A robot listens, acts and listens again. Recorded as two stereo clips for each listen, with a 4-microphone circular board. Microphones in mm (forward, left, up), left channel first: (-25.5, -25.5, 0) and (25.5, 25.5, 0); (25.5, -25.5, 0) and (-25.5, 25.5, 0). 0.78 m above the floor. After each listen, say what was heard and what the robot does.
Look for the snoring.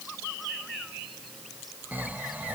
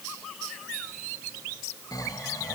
The snoring: 20° right. Turn 20° right.
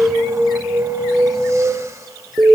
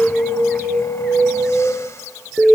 Keep listening.
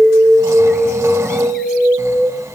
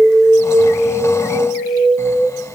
Keep listening.
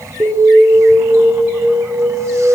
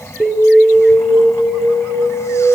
Facing the snoring, 1 to 2 m away.